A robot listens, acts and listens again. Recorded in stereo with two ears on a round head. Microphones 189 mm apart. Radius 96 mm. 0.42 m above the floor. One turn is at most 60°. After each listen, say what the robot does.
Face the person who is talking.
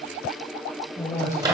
Turn 30° left.
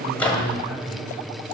Turn 15° right.
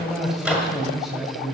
Found it: a man speaking, straight ahead.